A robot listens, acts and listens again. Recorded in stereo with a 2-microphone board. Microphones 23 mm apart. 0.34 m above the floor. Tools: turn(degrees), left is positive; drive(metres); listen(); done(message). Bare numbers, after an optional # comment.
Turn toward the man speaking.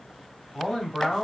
turn(-30)
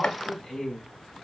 done("Found it: a man speaking, straight ahead, 1 to 2 m away.")